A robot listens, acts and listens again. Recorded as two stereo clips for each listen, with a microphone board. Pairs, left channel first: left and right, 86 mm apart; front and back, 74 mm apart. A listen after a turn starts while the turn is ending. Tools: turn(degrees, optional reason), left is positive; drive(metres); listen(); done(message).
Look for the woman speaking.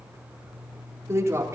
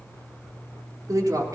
turn(degrees=-145, reason="The woman speaking: 145° right.")
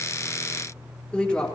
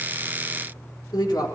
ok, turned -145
turn(degrees=10, reason="The woman speaking is now 10° left.")
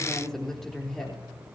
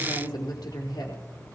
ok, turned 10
done("Facing the woman speaking, 2 to 4 m away.")